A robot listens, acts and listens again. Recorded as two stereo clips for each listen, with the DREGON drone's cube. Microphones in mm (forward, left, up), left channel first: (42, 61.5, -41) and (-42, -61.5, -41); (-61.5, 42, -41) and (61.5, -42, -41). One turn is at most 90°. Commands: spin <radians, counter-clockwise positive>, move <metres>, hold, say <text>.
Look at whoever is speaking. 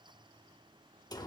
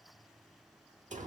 hold
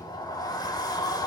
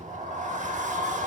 hold
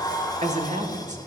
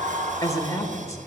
spin -1.57
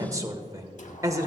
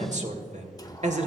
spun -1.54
spin -1.05
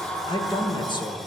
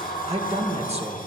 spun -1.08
say Found it: a man speaking, straight ahead.